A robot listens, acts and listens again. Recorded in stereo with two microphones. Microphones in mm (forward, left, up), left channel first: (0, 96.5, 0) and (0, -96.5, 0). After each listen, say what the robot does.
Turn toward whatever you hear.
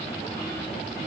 Keep listening.
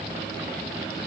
Keep listening.
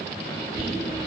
Turn 50° right.
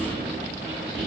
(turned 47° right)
Turn 80° right.
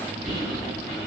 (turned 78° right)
Facing the whispering, 1 to 2 m away.